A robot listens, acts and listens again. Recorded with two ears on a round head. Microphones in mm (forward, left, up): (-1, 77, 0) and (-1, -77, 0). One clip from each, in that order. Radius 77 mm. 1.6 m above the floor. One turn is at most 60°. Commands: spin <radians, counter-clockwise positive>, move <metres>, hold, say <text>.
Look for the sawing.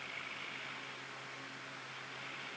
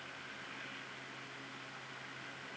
hold
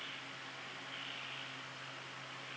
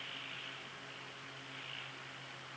hold
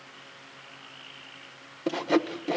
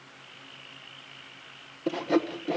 spin 0.35
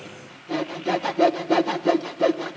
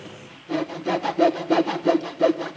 say Found it: sawing, straight ahead, under 1 m away.